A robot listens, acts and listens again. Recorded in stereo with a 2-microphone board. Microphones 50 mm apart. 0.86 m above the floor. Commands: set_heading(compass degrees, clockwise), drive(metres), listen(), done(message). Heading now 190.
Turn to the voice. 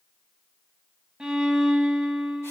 listen()
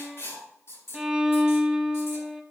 listen()
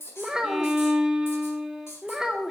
set_heading(205)
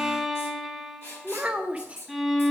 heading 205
set_heading(0)
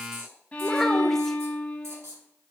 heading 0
listen()
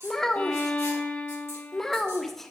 set_heading(350)
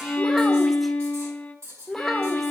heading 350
done("Found it: a child speaking, straight ahead, under 1 m away.")